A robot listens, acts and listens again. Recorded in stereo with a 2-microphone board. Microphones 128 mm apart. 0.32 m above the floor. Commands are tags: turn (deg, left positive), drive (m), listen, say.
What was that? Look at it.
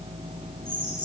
<turn deg="30"/>
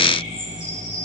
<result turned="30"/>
<turn deg="125"/>
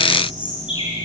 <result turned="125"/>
<turn deg="40"/>
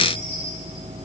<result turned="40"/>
<listen/>
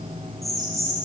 <say>Found it: a bird, straight ahead, over 4 m away.</say>